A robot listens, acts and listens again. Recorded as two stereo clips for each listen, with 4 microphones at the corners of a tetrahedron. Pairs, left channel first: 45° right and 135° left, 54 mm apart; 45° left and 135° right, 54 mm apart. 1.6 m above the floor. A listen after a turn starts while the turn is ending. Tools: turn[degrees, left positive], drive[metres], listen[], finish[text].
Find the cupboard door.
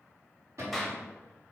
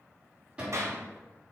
Thought: The cupboard door: 155° left.
Action: turn[155]
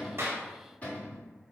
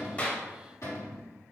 Thought: The cupboard door is now 15° left.
Action: turn[15]
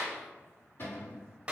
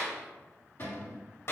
Action: finish[Facing the cupboard door.]